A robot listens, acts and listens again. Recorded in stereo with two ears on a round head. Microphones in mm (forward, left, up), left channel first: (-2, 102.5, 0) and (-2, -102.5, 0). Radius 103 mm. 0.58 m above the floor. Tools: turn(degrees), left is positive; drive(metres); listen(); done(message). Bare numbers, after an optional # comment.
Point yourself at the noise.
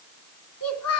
turn(90)
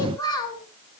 # So it is at 20° left.
turn(20)
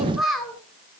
done("Found it: a child speaking, straight ahead, over 4 m away.")